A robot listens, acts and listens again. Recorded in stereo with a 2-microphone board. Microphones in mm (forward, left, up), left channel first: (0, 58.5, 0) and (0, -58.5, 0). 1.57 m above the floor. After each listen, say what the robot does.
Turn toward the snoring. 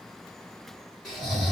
Turn 30° left.
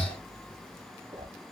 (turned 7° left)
Turn 30° left.
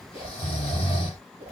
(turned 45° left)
Turn 125° left.
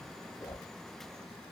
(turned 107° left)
Turn 20° left.
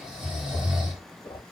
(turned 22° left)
Facing the snoring, 1 to 2 m away.